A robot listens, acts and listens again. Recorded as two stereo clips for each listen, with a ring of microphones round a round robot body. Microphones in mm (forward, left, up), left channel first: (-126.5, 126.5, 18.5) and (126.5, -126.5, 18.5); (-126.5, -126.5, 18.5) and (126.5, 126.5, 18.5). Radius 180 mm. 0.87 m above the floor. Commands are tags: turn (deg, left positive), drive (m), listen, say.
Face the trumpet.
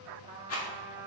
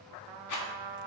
<turn deg="30"/>
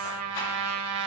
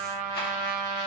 <say>Found it: a trumpet, straight ahead, 1 to 2 m away.</say>